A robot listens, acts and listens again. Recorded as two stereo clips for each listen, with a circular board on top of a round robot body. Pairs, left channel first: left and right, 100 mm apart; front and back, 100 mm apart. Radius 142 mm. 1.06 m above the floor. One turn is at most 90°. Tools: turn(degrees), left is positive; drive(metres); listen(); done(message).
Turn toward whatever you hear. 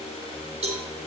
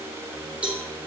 turn(degrees=-90)
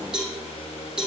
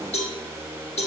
done("Found it: a cowbell, straight ahead, 2 to 4 m away.")